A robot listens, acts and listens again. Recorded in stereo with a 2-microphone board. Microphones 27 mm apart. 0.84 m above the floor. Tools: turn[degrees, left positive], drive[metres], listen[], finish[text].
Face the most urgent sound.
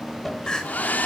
Thought: The crying: about 30° left or 150° left.
Action: turn[30]
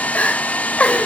Thought: So it is at 120° left.
Action: turn[120]
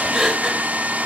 Thought: The crying is now 20° right.
Action: turn[-20]
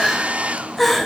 Action: finish[Found it: crying, straight ahead, over 4 m away.]